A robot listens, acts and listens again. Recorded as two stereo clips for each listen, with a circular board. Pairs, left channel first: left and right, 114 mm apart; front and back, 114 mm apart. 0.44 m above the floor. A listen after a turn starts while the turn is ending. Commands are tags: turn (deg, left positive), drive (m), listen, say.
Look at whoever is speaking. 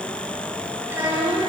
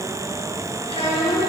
<turn deg="-15"/>
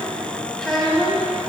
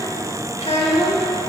<turn deg="10"/>
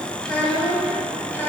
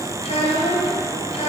<turn deg="20"/>
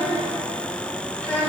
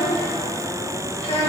<turn deg="15"/>
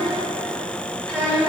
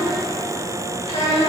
<turn deg="10"/>
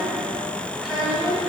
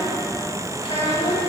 <say>Found it: a child speaking, straight ahead.</say>